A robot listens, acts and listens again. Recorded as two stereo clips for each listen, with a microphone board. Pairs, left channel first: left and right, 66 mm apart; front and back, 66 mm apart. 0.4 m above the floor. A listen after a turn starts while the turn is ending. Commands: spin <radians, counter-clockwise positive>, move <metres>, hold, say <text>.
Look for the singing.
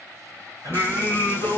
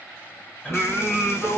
spin -0.96
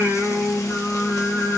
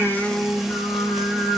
spin 0.26
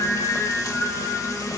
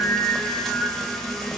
spin 0.26
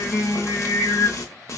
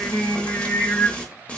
spin 0.52
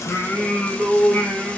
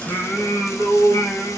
say Found it: singing, straight ahead.